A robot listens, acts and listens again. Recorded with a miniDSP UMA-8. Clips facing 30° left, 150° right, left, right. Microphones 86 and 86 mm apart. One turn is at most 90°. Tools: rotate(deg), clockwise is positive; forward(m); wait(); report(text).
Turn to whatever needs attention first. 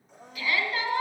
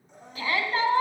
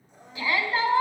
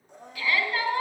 rotate(-90)
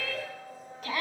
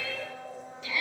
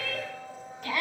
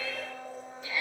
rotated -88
rotate(-65)
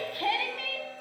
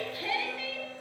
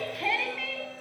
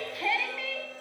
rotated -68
report("Found it: a shout, straight ahead.")